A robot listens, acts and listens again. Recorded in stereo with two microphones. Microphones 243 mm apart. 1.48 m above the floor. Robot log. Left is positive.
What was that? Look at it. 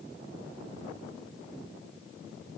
cmd idle
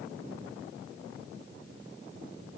cmd idle
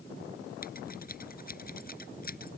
note: The scissors: about 35° left or 145° left.
cmd yaw +35
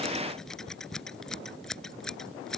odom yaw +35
end: Facing the scissors.